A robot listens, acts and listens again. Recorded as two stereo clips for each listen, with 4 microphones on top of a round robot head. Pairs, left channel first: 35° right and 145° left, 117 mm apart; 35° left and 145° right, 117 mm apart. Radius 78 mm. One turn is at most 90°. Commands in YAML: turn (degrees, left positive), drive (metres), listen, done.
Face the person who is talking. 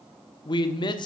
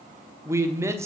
turn: -80
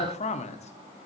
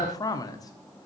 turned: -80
turn: -20
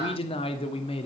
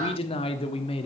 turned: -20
done: "Found it: a man speaking, straight ahead, 1 to 2 m away."